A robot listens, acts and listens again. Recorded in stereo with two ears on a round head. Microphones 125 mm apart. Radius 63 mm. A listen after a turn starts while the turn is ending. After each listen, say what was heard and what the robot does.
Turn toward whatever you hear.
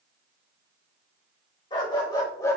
The dog barking: about 25° left or 155° left. Turn 25° left.
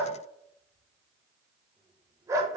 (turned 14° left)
So it is at 25° right. Turn 25° right.
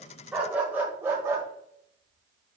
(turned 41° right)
The dog barking is now 20° right. Turn 20° right.
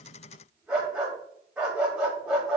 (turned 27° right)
Found it: a dog barking, straight ahead, 1 to 2 m away.